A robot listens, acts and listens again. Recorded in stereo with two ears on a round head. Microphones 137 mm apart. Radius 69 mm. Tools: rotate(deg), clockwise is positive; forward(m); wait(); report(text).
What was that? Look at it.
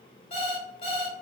rotate(-45)
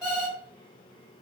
report("Facing the alarm clock.")